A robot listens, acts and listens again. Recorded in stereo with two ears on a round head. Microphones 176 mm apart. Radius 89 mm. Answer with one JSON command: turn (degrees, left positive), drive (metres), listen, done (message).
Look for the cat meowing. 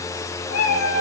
{"turn": 90}
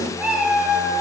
{"done": "Facing the cat meowing, 2 to 4 m away."}